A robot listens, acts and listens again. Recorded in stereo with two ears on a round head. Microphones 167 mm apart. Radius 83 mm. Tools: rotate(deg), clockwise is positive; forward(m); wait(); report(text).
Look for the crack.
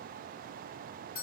wait()
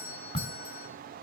rotate(-30)
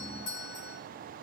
wait()
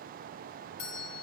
report("I heard a crack, but can't make it out now. It was about straight ahead or 120° left.")